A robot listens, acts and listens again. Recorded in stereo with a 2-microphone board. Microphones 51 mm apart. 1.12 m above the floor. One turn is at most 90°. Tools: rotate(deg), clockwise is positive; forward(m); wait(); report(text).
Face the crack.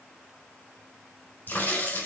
rotate(-35)
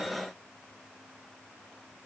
wait()
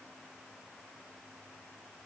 report("I heard a crack, but can't make it out now. It was about straight ahead or 110° left.")